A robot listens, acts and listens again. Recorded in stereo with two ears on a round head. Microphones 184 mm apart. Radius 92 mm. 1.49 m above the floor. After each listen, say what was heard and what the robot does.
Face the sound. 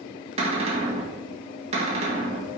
The cupboard door: about 30° right or 150° right. Turn 30° right.
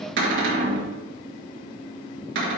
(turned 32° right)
So it is at 115° right. Turn 115° right.
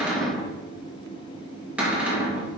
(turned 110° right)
Facing the cupboard door.